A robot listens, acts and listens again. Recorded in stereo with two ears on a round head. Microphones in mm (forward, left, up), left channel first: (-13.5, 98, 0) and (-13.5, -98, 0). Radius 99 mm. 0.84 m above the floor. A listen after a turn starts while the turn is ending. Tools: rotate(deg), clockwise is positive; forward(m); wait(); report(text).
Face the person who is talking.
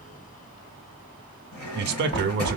rotate(50)
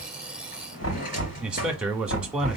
report("Facing the man speaking.")